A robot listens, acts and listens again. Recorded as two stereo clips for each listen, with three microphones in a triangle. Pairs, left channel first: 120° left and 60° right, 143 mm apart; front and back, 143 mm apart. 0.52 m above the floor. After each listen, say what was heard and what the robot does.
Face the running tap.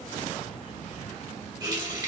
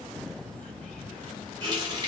The running tap: 120° right. Turn 120° right.
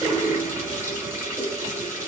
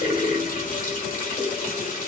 The running tap is now 10° left. Turn 10° left.
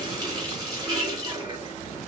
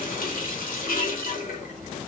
Facing the running tap, 1 to 2 m away.